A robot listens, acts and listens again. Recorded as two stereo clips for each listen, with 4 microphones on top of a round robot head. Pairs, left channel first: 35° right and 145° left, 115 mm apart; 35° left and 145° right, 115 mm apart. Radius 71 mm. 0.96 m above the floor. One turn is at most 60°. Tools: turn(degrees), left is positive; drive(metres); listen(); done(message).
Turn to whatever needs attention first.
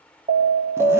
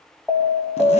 turn(degrees=60)
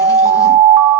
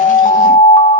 turn(degrees=60)
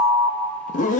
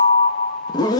turn(degrees=25)
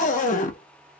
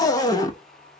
listen()
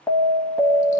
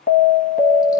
turn(degrees=25)
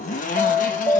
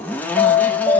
done("Found it: an alarm, straight ahead, 1 to 2 m away.")